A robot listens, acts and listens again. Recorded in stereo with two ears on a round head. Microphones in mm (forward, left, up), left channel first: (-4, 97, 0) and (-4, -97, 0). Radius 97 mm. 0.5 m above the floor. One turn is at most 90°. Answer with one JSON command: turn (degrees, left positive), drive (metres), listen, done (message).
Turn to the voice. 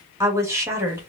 {"turn": -30}
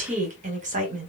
{"turn": -90}
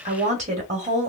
{"turn": -40}
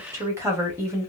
{"turn": -15}
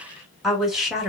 {"done": "Facing the woman speaking."}